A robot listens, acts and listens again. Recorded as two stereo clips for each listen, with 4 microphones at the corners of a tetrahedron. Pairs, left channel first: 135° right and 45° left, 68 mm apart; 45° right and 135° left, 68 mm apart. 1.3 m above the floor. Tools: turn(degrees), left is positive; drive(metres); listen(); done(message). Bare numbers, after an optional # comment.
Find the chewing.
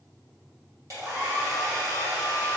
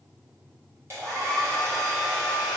listen()
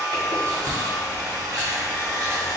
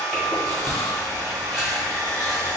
# The chewing: 50° left.
turn(50)
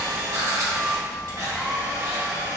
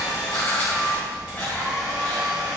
# The chewing is now 25° left.
turn(25)
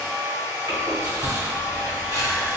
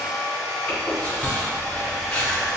# The chewing is now 25° left.
turn(25)
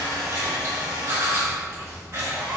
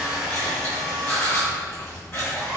done("Found it: chewing, straight ahead.")